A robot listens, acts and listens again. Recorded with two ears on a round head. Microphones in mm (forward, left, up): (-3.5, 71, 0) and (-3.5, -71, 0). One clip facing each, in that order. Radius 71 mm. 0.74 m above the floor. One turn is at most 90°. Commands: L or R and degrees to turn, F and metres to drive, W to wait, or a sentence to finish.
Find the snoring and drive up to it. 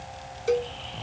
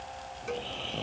R55
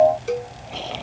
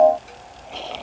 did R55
F1.0
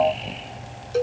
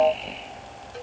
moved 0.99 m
F1.0
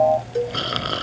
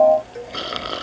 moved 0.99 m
F1.0
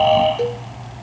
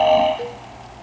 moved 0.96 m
F1.0
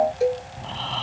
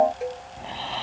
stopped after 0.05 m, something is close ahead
R15
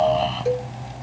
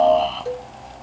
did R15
Arrived at the snoring, straight ahead.